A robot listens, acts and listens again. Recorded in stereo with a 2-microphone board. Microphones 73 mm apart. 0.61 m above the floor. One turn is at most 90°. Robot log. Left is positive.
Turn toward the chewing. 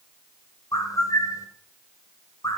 cmd idle
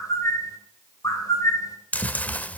note: The chewing: about 20° left or 160° left.
cmd yaw +20
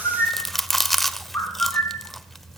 end: Found it: chewing, straight ahead, under 1 m away.